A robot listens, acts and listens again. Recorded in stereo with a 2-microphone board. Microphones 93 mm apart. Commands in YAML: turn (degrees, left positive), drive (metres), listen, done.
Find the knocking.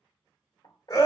turn: 60
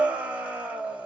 listen: true
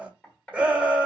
turn: 20
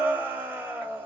listen: true
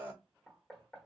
done: "Found it: knocking, straight ahead."